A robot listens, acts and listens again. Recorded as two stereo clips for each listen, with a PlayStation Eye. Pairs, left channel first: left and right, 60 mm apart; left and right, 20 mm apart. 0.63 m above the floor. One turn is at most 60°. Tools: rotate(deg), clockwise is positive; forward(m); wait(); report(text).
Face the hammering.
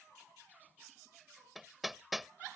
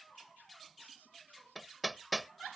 rotate(-30)
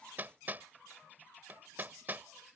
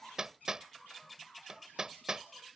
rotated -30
rotate(30)
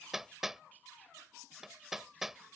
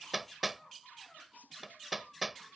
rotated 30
report("Found it: hammering, straight ahead.")